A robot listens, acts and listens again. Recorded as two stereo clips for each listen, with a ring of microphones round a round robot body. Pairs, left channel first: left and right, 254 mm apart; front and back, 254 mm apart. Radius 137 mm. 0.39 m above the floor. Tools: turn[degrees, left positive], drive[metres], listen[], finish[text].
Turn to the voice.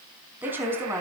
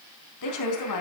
Thought: The woman speaking: 10° right.
Action: turn[-10]
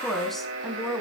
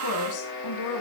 Action: finish[Found it: a woman speaking, straight ahead, over 4 m away.]